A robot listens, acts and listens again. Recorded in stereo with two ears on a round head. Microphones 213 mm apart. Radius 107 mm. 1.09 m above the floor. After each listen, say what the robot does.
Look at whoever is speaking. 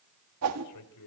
Turn 90° left.
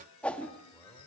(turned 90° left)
Keep listening.
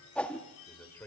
Turn 10° left.
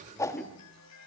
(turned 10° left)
Keep listening.
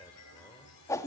Keep listening.
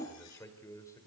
Turn 15° left.
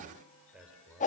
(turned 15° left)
Facing the man speaking, over 4 m away.